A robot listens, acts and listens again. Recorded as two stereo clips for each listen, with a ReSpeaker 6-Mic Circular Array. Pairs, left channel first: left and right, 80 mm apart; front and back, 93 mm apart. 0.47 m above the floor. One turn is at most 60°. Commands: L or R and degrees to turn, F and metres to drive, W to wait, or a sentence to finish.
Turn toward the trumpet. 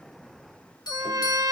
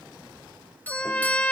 R60
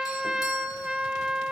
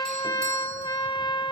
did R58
R10
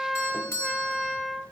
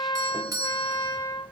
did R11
Facing the trumpet.